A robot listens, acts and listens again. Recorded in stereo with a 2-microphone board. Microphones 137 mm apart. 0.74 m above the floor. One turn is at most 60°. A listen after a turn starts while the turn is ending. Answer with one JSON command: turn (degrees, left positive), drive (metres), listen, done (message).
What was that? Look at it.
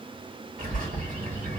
{"turn": -60}
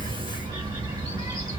{"turn": -30}
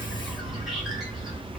{"done": "Facing the bird."}